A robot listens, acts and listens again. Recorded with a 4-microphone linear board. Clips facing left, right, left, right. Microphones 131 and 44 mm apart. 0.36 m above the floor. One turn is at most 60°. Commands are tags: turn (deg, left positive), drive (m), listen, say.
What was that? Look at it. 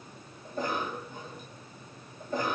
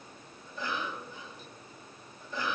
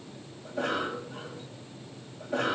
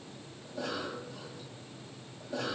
<turn deg="45"/>
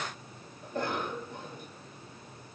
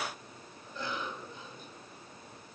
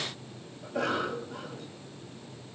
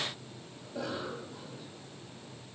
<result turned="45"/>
<turn deg="60"/>
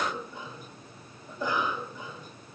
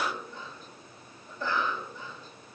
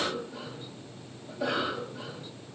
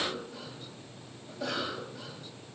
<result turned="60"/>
<turn deg="15"/>
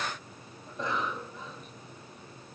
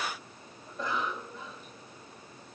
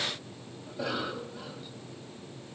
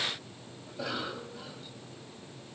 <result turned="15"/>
<say>Found it: a cough, straight ahead.</say>